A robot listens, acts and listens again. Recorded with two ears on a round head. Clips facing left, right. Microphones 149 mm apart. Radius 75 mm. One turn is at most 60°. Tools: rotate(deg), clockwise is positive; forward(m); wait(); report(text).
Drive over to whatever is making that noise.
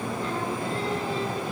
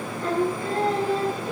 rotate(40)
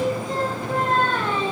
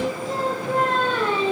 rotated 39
forward(1.0)
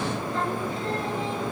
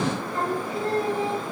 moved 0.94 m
rotate(10)
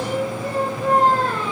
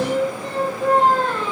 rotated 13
forward(1.0)
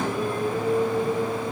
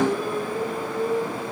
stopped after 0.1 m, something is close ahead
report("Blocked. The singing is further on, straight ahead.")